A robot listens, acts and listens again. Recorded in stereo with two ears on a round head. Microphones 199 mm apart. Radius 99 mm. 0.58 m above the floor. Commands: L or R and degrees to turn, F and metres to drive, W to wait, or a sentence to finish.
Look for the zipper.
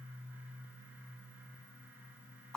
W
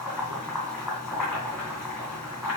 W
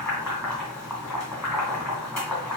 I can't make out a zipper to turn to.